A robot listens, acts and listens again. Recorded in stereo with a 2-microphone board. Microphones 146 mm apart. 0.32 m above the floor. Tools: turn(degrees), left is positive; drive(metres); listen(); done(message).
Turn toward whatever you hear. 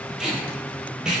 turn(degrees=-30)
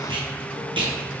turn(degrees=-145)
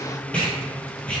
turn(degrees=10)
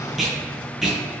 done("Found it: tape being pulled, straight ahead.")